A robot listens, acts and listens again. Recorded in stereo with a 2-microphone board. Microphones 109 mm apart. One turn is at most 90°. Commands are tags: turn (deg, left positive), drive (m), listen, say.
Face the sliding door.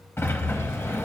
<turn deg="20"/>
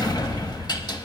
<turn deg="90"/>
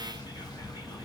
<turn deg="45"/>
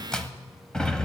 <turn deg="10"/>
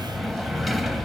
<say>Found it: a sliding door, straight ahead.</say>